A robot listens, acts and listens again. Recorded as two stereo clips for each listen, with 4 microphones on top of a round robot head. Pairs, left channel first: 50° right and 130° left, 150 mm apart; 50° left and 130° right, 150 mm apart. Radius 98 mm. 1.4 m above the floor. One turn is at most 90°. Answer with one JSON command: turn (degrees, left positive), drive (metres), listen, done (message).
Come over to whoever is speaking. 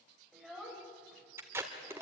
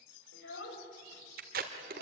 {"turn": 40}
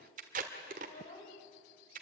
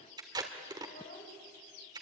{"drive": 1.0}
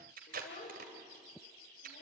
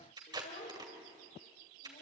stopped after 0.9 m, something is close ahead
{"done": "Blocked. The child speaking is further on, straight ahead."}